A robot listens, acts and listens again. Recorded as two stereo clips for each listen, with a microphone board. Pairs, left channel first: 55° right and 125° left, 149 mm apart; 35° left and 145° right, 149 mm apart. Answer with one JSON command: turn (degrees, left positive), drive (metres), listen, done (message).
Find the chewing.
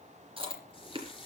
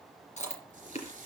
{"turn": 70}
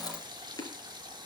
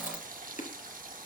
{"turn": 10}
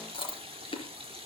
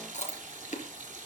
{"done": "Facing the chewing."}